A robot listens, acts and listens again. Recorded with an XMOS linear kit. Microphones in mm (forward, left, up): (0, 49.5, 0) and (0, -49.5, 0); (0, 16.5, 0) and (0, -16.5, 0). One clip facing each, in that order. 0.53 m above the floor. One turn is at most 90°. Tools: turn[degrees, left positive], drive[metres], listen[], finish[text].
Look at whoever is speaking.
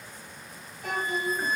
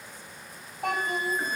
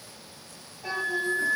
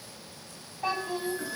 Thought: The child speaking: about 60° right or 120° right.
Action: turn[-60]
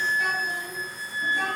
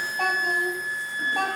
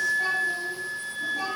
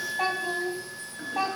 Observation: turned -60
Thought: So it is at 80° right.
Action: turn[-80]
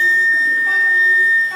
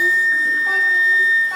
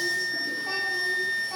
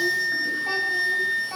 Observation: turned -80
Thought: The child speaking is now 20° right.
Action: turn[-20]
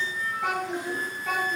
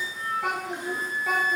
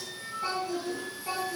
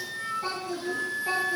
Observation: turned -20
Action: finish[Facing the child speaking, 2 to 4 m away.]